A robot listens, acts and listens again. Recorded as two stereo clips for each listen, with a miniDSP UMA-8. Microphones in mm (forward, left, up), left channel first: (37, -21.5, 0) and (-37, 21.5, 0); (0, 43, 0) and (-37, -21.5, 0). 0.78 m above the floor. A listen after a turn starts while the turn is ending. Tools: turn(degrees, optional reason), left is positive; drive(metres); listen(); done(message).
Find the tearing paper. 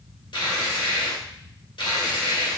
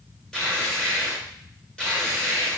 turn(degrees=-20, reason="The tearing paper: 20° right.")
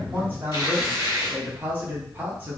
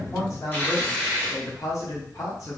done("Facing the tearing paper, 1 to 2 m away.")